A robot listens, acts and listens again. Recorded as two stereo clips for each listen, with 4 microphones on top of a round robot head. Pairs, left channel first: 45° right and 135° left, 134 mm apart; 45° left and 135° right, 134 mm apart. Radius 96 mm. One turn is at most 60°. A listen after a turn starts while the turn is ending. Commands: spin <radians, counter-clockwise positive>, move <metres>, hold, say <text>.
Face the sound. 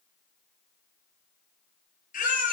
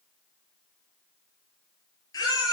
spin -0.26
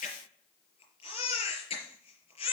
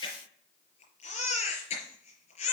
say Facing the baby crying, over 4 m away.